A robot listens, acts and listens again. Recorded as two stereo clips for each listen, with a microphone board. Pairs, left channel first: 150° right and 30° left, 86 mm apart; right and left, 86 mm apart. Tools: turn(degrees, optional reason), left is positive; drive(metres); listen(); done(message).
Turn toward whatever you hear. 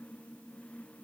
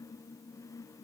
listen()
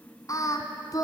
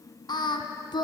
turn(degrees=-110, reason="The singing: 110° right.")
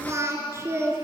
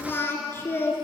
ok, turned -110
turn(degrees=-25, reason="The singing is now 25° right.")
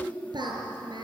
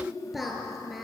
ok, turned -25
done("Found it: singing, straight ahead, over 4 m away.")